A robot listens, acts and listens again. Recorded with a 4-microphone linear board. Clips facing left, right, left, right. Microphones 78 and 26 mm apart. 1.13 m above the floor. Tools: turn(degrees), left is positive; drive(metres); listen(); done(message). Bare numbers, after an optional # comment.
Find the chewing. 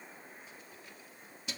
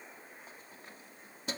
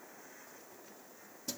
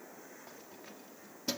listen()
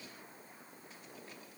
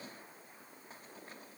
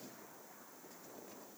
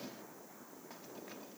listen()
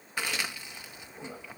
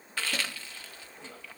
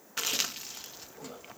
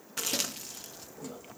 # The chewing: about 15° left or 165° left.
turn(15)
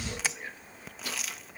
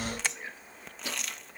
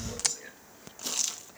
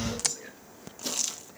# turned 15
done("Found it: chewing, straight ahead.")